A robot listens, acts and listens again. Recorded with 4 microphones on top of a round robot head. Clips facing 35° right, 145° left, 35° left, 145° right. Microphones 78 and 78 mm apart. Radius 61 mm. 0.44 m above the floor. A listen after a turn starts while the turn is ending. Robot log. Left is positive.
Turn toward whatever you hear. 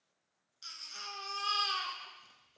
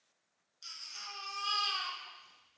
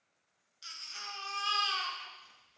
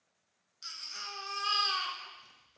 note: The baby crying: 80° right.
cmd yaw -80
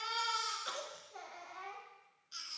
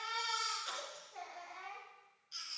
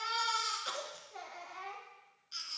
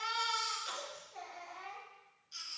end: Found it: a baby crying, straight ahead, 1 to 2 m away.